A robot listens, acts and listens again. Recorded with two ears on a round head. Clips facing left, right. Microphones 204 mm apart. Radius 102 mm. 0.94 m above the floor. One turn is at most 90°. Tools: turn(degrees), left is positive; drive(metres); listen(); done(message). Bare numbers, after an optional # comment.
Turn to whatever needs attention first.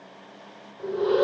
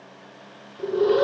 # The alarm: about 70° right or 110° right.
turn(-70)
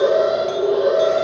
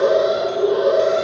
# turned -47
# So it is at 20° right.
turn(-20)
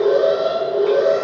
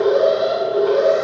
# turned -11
# The alarm is now 10° right.
turn(-10)
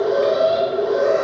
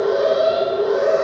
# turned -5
done("Facing the alarm.")